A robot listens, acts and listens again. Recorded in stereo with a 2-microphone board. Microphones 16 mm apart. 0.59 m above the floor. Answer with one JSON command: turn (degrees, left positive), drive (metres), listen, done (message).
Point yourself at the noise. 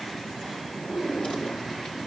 {"turn": 90}
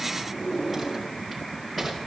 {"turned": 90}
{"done": "Facing the drawer."}